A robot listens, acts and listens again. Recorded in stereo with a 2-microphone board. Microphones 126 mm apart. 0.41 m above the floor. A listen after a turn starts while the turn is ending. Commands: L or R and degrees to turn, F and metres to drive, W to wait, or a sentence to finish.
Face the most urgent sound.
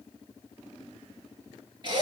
W
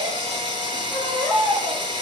R30
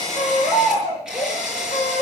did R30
L25
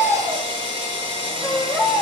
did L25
R10
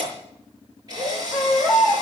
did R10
Found it: a baby crying, straight ahead.